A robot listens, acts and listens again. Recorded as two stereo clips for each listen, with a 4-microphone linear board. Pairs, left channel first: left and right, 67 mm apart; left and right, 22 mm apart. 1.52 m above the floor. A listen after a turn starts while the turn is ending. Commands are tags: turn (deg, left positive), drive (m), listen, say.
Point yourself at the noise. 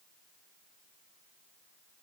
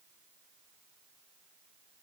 <listen/>
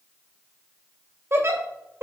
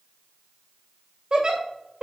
<turn deg="-40"/>
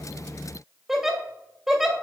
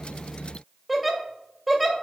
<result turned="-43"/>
<say>Facing the giggle.</say>